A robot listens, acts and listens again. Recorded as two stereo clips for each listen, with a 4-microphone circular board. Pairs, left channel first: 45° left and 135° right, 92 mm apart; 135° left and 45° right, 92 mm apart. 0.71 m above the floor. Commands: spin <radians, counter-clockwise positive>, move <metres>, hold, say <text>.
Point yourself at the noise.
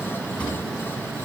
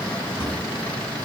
spin 2.09
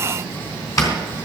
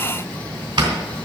say Facing the drawer, 2 to 4 m away.